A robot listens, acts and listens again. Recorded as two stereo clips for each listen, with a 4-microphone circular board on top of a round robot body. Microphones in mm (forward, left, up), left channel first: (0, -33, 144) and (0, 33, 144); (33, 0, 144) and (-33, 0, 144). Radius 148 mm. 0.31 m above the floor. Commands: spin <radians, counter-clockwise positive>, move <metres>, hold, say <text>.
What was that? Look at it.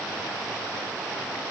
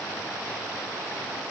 hold
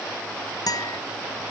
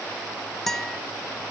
spin -1.48
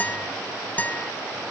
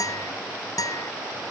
spin -0.44
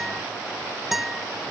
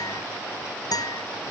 say Facing the guitar.